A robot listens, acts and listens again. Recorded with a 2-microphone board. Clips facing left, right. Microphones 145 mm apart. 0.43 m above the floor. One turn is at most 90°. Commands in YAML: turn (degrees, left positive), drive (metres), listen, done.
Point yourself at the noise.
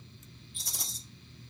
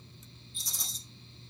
turn: 70
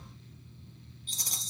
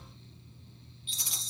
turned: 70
turn: 40
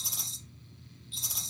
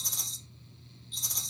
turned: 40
done: "Facing the rattle, 2 to 4 m away."